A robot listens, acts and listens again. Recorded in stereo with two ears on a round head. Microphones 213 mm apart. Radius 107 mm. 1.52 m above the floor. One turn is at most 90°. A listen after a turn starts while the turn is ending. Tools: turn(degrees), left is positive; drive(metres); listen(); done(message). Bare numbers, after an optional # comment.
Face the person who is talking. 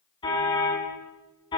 listen()
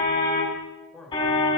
turn(30)
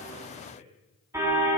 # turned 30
# So it is at 145° left.
turn(90)
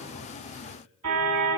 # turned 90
# Nothing new. It was at 55° left.
turn(55)
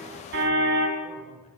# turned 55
listen()
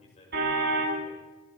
# The man speaking is now 25° left.
turn(25)
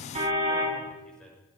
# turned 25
done("Found it: a man speaking, straight ahead, over 4 m away.")